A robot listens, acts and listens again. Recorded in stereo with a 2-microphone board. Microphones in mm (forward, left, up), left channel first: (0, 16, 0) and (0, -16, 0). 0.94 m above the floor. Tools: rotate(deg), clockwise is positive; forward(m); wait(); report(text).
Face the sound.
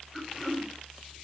rotate(30)
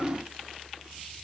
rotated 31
rotate(-25)
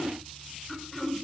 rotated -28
report("Facing the throat clearing.")